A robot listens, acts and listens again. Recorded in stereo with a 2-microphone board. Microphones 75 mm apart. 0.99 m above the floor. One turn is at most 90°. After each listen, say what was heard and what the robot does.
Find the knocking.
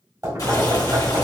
The knocking: about 55° right or 125° right. Turn 55° right.
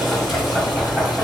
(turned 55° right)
Found it: knocking, straight ahead, 1 to 2 m away.